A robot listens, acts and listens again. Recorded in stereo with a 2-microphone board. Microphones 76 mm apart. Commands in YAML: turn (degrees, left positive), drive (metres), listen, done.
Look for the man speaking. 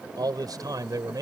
turn: -55
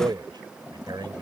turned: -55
turn: -80
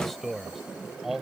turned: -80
done: "Found it: a man speaking, straight ahead."